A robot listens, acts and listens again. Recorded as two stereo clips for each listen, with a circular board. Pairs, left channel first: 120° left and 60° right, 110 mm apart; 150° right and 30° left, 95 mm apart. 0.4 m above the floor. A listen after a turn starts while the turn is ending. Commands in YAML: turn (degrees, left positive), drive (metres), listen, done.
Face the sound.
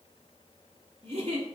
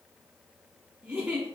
turn: -50
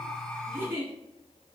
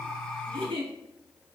turn: 10
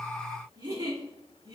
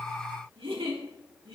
done: "Found it: a giggle, straight ahead, 1 to 2 m away."